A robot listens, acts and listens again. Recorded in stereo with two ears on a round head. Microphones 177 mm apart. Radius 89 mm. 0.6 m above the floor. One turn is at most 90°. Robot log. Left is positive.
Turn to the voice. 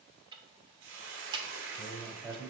cmd yaw -30
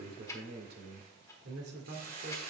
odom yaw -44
note: So it is at 120° right.
cmd yaw -90
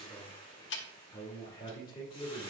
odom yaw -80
note: The man speaking is now 25° left.
cmd yaw +25
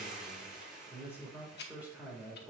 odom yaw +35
note: The man speaking is now 10° right.
cmd yaw -10
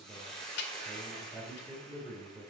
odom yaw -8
end: Facing the man speaking, 2 to 4 m away.